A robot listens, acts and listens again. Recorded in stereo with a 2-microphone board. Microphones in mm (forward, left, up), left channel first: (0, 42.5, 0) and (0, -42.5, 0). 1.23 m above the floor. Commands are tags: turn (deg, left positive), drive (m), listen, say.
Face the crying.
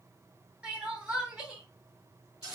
<turn deg="-30"/>
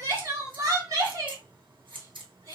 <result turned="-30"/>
<turn deg="-140"/>
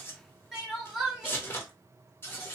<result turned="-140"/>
<say>Facing the crying, 1 to 2 m away.</say>